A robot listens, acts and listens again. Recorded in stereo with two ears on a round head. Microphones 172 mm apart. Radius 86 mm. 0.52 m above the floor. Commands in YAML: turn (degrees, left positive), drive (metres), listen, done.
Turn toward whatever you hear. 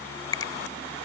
turn: 20
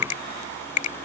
turn: 140
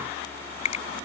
turn: 40
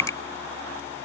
turn: 20
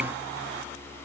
listen: true
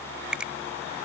done: "Facing the finger snap."